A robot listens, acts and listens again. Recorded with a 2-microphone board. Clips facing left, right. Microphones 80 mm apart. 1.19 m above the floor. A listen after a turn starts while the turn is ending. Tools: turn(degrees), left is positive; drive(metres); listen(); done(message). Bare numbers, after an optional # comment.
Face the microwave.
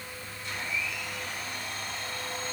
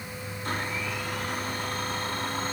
listen()
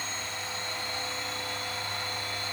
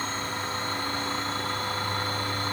listen()
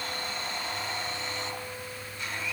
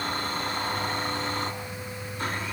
done("I can't make out a microwave to turn to.")